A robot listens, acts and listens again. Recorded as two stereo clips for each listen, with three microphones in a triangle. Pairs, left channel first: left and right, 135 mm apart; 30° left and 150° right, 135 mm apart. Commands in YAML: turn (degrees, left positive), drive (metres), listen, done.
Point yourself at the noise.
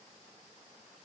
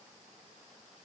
listen: true
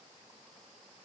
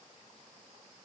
listen: true
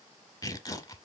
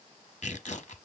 turn: 35
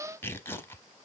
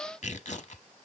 turn: 25
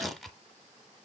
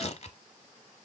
done: "Found it: tearing paper, straight ahead."